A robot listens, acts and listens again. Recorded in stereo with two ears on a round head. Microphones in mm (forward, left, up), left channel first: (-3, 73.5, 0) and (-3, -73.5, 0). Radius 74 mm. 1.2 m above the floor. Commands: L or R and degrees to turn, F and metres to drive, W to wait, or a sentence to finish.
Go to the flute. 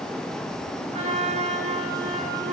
R40
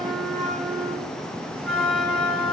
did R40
F1.0
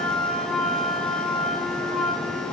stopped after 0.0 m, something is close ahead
Blocked. The flute is further on, straight ahead.